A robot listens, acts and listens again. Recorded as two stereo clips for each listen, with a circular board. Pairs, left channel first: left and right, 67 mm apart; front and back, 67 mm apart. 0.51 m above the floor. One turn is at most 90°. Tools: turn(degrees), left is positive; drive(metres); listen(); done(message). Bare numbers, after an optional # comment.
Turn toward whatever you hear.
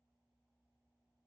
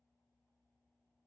listen()
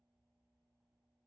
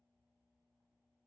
listen()
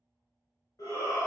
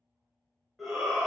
# The shout: 85° left.
turn(85)
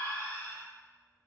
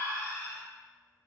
# The shout is now 35° left.
turn(35)
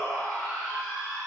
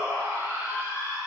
# The shout is now 10° left.
turn(10)
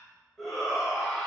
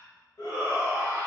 done("Found it: a shout, straight ahead, 1 to 2 m away.")